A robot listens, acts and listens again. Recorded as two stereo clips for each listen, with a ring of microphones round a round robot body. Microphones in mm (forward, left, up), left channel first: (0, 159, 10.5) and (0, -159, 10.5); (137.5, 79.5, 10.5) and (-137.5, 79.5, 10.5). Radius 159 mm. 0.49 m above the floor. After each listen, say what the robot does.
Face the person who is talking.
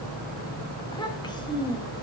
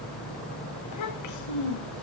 Turn 15° left.
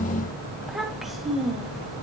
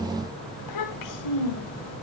Facing the child speaking, 1 to 2 m away.